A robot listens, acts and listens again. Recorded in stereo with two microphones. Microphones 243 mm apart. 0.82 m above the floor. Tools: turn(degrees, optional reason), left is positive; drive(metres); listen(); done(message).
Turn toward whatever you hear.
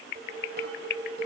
turn(degrees=-45, reason="The dishes clattering: about 45° right or 135° right.")
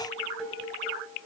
done("Facing the dishes clattering, 2 to 4 m away.")